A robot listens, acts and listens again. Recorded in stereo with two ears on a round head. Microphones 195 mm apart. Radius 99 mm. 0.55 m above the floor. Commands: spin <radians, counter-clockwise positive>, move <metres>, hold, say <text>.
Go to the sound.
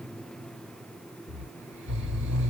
spin -1.05
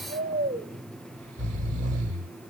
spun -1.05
spin -0.44
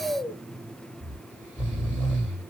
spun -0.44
spin 0.17
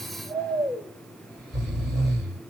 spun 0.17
move 1.0
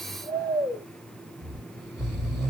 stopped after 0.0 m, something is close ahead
say Blocked. The snoring is further on, straight ahead.